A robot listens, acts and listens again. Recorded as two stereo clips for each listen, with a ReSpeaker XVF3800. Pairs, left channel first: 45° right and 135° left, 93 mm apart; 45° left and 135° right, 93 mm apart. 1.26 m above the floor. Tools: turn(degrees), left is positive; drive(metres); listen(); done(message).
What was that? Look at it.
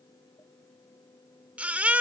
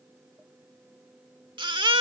turn(degrees=-150)
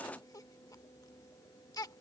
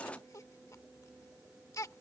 done("Found it: a baby crying, straight ahead.")